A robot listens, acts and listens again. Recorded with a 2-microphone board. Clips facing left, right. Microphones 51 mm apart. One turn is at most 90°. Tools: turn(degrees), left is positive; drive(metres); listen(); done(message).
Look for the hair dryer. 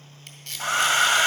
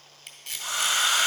turn(degrees=50)
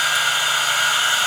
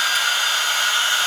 turn(degrees=15)
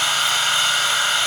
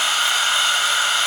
done("Found it: a hair dryer, straight ahead, under 1 m away.")